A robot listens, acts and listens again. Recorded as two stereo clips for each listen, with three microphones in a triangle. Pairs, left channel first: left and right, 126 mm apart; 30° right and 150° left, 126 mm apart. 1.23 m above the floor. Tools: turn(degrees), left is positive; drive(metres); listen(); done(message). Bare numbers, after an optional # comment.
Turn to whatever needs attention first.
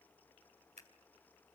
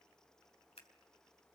listen()
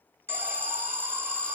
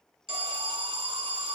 # The alarm: 165° right.
turn(-165)
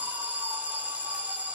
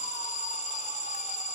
# The alarm is now 10° right.
turn(-10)
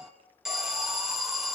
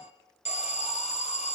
done("Facing the alarm, 2 to 4 m away.")